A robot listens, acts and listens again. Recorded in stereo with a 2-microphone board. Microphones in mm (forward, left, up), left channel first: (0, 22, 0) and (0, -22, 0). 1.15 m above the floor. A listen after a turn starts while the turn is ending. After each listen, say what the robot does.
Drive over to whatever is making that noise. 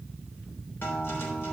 Turn 55° left.
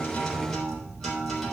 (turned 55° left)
Drive 1.0 m forward.
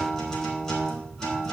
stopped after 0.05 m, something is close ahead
Blocked. The guitar is further on, straight ahead.